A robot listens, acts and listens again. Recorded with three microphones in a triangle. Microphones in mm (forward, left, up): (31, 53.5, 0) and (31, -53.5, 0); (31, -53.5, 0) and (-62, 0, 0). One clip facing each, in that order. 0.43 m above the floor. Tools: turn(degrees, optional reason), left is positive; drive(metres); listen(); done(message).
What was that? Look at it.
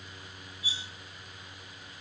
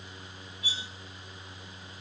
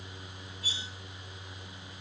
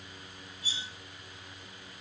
turn(degrees=-70, reason="The cutlery clinking: 70° right.")
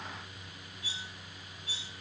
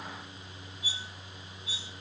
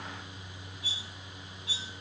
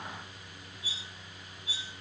turn(degrees=-15, reason="The cutlery clinking is now 15° right.")
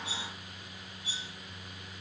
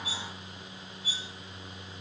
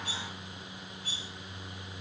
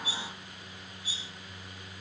done("Facing the cutlery clinking.")